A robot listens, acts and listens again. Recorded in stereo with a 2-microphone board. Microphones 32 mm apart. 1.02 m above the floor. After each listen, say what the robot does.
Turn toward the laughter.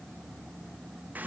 Keep listening.
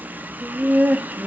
Turn 60° right.
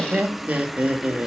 Turn 50° right.
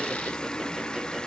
Keep listening.
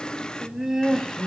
Turn 10° right.
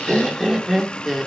Found it: laughter, straight ahead, 2 to 4 m away.